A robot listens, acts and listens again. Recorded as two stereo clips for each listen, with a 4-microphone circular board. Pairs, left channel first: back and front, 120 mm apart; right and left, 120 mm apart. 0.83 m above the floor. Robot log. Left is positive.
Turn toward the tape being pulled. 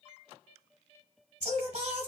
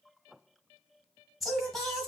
cmd idle
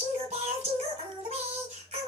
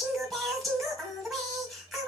cmd idle
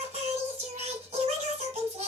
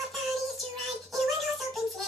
end: I can't make out tape being pulled, only singing.